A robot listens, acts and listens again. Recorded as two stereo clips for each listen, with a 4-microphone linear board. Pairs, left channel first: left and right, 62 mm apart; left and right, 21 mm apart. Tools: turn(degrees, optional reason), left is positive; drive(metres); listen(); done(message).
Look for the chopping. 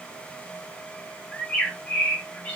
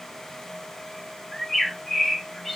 listen()
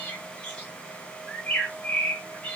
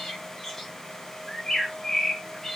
listen()
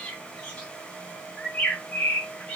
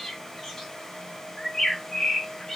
done("I can't make out chopping to turn to.")